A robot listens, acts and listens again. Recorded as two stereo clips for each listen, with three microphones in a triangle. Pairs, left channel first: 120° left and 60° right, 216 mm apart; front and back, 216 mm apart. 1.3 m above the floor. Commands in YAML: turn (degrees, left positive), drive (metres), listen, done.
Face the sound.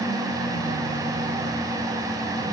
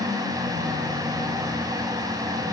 listen: true
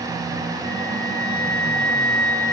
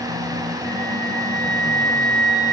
turn: 135
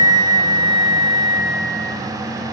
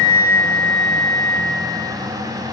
done: "Found it: a flute, straight ahead."